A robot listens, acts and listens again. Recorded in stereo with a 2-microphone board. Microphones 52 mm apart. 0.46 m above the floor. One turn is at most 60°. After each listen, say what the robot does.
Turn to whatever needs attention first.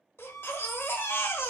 Turn 50° left.
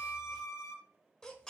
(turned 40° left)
Turn 15° left.
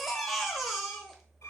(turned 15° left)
Found it: a baby crying, straight ahead, under 1 m away.